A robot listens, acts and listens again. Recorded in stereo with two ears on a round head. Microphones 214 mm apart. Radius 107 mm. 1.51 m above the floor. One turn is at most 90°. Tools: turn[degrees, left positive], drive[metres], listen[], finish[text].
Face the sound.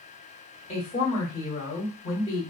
Thought: The woman speaking: about 25° left or 155° left.
Action: turn[25]
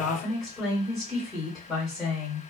Action: finish[Found it: a woman speaking, straight ahead, 1 to 2 m away.]